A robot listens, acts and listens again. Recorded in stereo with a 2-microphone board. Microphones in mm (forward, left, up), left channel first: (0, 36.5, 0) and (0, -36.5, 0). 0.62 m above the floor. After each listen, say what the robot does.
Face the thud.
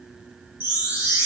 Keep listening.
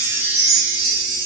Keep listening.
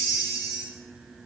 I can't make out a thud, only a chime.